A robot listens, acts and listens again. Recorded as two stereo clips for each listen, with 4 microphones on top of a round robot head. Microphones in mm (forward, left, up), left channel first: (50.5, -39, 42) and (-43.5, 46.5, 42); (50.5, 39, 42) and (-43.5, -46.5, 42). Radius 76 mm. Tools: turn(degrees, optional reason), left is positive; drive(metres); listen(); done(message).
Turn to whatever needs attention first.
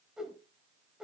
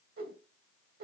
listen()
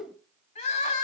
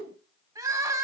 turn(degrees=-75, reason="The crying: 75° right.")
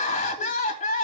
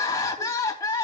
turn(degrees=-20, reason="The crying is now 20° right.")
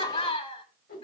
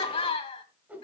done("Found it: crying, straight ahead, 2 to 4 m away.")